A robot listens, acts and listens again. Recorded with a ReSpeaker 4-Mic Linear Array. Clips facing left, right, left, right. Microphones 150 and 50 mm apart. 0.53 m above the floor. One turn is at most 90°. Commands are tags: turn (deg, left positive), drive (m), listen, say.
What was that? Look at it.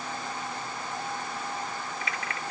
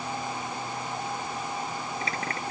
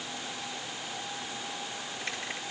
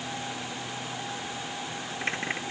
<turn deg="-35"/>
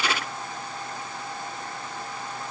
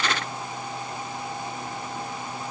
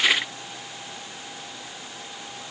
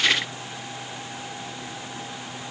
<listen/>
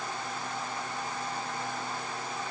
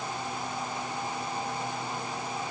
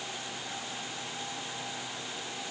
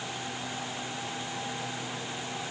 <say>I heard a dropped coin, but can't make it out now. It was about straight ahead or 110° right.</say>